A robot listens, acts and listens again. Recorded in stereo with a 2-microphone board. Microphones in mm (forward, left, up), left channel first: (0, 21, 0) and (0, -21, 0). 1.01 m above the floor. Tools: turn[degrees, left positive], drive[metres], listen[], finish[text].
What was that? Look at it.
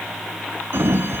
Action: turn[-90]
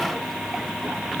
Action: listen[]
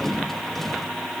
Action: finish[Facing the sliding door, 1 to 2 m away.]